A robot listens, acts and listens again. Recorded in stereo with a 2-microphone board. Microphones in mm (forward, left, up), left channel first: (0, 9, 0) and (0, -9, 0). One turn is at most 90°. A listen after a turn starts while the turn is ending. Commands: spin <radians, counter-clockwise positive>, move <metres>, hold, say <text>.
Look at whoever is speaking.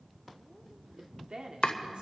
spin -1.13
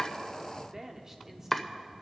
spin -0.44
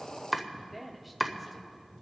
say Found it: a woman speaking, straight ahead, 1 to 2 m away.